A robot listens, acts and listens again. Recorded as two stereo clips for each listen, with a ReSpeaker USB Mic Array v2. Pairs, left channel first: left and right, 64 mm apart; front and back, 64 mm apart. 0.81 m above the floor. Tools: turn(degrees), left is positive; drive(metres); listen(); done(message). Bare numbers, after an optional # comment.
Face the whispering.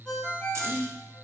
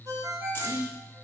# The whispering: 145° right.
turn(-145)
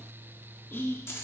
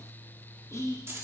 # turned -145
# The whispering is now 40° left.
turn(40)
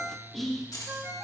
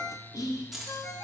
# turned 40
done("Found it: whispering, straight ahead.")